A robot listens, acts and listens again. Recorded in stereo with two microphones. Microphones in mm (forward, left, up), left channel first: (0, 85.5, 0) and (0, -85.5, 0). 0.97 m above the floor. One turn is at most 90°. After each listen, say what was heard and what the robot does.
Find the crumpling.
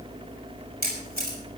Keep listening.
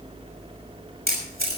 Keep listening.
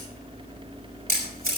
I can't make out crumpling to turn to.